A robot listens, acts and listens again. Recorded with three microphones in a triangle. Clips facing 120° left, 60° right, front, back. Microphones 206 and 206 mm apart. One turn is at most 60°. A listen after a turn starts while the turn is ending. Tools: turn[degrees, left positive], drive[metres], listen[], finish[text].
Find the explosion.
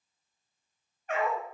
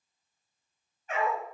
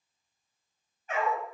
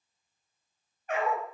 Action: listen[]
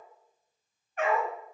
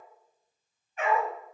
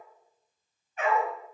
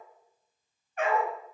Action: listen[]
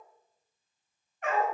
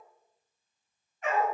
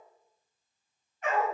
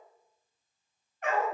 Action: finish[I can't make out an explosion, only a dog barking.]